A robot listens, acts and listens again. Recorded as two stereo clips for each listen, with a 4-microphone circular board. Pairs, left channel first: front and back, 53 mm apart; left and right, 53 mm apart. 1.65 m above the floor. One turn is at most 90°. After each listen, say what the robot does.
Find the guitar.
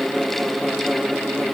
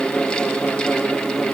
Keep listening.
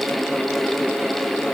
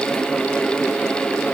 Keep listening.
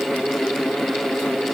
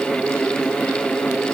I can't make out a guitar.